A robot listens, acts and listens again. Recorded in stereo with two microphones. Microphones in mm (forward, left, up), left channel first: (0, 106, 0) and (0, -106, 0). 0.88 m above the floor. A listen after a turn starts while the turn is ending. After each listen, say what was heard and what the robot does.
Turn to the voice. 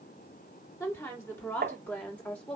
Turn 30° left.
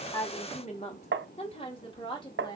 So it is at 160° left. Turn 160° left.
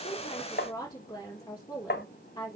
The woman speaking is now 20° left. Turn 20° left.
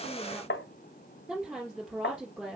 Found it: a woman speaking, straight ahead.